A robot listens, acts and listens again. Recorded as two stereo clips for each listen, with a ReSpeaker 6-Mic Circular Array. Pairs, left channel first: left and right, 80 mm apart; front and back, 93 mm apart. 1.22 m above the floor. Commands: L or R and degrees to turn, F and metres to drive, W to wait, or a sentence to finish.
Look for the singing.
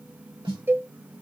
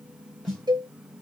W
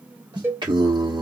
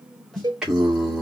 R95
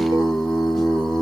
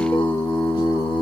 Found it: singing, straight ahead, 1 to 2 m away.